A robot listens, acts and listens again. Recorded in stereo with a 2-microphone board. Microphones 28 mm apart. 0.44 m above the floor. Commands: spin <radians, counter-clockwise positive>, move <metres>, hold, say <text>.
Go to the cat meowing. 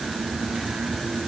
hold
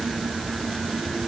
hold
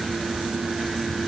say I can't make out a cat meowing to turn to.